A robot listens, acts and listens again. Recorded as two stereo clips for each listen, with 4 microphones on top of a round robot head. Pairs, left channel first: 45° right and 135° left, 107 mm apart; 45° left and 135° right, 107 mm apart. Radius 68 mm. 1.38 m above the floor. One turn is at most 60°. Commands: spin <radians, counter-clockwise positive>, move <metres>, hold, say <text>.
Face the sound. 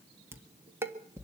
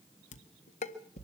spin 1.05
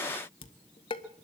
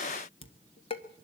say Facing the dishes clattering.